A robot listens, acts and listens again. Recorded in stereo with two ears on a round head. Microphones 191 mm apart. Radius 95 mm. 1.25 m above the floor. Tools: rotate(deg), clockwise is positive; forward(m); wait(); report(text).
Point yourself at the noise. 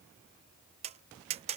rotate(30)
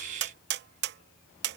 rotate(120)
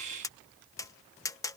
rotate(-15)
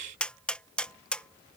report("Found it: tapping, straight ahead.")